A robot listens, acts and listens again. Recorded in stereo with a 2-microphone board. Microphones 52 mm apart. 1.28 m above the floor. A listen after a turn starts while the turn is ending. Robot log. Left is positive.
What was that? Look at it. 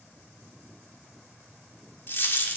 note: The dropped coin: about 50° left or 130° left.
cmd yaw +50
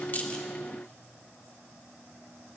cmd idle
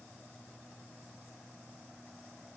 end: I heard a dropped coin, but can't make it out now. It was about straight ahead or 80° left.